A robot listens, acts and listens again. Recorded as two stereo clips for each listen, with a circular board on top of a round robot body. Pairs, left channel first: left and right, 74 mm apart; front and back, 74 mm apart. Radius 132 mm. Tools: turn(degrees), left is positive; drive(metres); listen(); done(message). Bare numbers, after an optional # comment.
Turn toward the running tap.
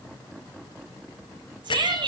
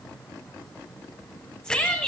listen()
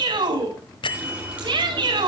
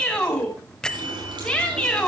# The running tap: 160° right.
turn(-160)
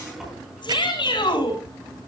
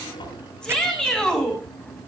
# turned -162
done("Found it: a running tap, straight ahead.")